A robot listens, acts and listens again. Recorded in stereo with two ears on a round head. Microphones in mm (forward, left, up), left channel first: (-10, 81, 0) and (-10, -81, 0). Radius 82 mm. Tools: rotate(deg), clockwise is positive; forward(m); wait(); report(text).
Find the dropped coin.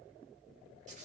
wait()
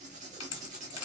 rotate(-90)
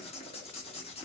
report("Facing where the dropped coin came from. I can't hear it now.")